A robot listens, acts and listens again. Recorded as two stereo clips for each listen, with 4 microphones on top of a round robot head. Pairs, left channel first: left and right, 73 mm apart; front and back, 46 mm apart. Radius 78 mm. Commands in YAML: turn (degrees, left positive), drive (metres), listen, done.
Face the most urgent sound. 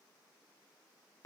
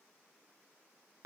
listen: true
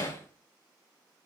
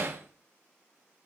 listen: true
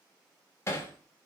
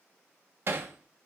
done: "I can't make out anything urgent to turn to."